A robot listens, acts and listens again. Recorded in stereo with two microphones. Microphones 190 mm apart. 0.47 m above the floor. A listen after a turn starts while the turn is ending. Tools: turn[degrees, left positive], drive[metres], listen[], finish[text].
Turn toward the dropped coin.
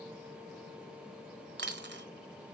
Thought: The dropped coin: about 65° right or 115° right.
Action: turn[-65]
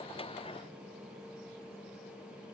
Action: listen[]
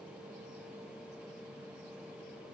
Action: finish[I heard a dropped coin, but can't make it out now. It was about straight ahead or 50° right.]